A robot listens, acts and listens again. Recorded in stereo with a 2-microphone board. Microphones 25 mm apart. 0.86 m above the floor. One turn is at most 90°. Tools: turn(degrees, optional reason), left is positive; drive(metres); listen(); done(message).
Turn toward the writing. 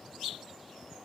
listen()
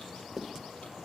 turn(degrees=-30)
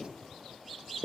turn(degrees=-90, reason="So it is at 145° right.")
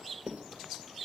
turn(degrees=-90, reason="The writing is now 95° right.")
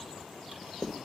done("Found it: writing, straight ahead.")